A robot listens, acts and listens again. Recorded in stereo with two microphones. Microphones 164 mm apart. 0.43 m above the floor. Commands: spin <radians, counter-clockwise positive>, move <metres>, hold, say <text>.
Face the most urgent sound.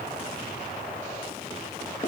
hold
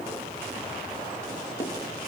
hold
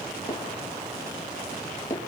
say I can't make out anything urgent, only hammering.